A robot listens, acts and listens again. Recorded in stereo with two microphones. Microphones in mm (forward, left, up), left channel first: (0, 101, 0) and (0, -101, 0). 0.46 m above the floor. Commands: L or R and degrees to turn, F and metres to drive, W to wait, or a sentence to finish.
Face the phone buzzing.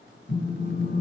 L70
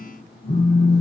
L40
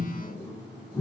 L10
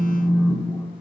Facing the phone buzzing.